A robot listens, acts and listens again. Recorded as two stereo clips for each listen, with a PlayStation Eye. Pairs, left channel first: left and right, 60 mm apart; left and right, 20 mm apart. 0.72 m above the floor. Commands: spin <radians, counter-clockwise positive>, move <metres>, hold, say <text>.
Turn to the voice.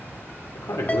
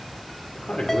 spin 1.22
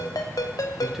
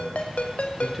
say Facing the man speaking, 1 to 2 m away.